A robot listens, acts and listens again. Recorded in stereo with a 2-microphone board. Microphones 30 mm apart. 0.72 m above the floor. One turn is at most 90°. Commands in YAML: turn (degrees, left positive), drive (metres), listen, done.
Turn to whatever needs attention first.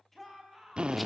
turn: 30
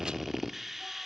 listen: true
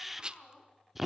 turn: 90
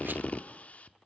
turn: 60
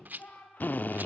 turn: 65
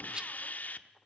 listen: true
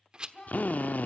turn: 25
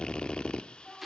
done: "Found it: a shout, straight ahead, over 4 m away."